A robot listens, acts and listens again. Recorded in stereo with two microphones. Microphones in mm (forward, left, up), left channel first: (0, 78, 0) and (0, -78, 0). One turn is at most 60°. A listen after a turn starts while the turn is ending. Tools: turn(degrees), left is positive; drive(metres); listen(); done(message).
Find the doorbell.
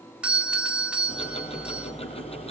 turn(degrees=-30)
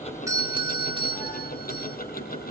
turn(degrees=-60)
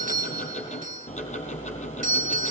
turn(degrees=-60)
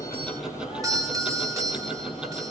turn(degrees=-25)
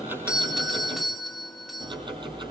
done("Found it: a doorbell, straight ahead, 2 to 4 m away.")